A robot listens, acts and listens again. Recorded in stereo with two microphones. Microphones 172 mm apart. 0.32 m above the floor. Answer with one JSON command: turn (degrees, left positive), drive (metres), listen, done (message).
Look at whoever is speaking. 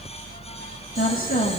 {"turn": 55}
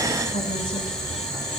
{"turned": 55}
{"listen": true}
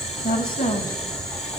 {"turn": 60}
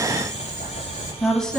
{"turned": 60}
{"done": "Facing the woman speaking."}